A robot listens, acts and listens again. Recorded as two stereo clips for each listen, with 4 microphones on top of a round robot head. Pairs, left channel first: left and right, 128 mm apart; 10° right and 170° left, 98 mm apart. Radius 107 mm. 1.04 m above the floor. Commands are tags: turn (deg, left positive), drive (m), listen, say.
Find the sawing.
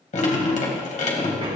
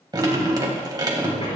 <listen/>
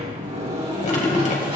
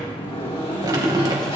<listen/>
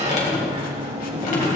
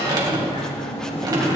<say>I can't make out sawing, only a sliding door and dripping.</say>